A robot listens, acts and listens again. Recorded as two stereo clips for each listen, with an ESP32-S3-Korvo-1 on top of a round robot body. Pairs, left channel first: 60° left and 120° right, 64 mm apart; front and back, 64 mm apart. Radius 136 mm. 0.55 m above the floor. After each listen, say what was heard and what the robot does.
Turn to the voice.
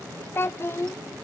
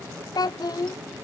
The child speaking: 10° left. Turn 10° left.
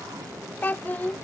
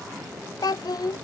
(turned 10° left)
Found it: a child speaking, straight ahead.